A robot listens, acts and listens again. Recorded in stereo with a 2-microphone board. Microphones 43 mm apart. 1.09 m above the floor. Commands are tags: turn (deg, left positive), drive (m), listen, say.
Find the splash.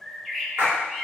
<turn deg="-55"/>
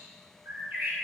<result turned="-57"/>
<listen/>
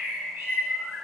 <say>I heard a splash, but can't make it out now. It was about straight ahead or 65° right.</say>